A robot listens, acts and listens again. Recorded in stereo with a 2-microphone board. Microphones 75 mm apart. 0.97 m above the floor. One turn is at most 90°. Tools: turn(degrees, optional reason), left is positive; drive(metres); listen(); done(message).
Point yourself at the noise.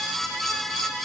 listen()
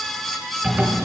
turn(degrees=-15, reason="The zipper: about 15° right or 165° right.")
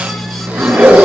turn(degrees=-90, reason="So it is at 150° right.")
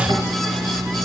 turn(degrees=-55, reason="The zipper is now 55° right.")
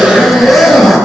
done("Facing the zipper, over 4 m away.")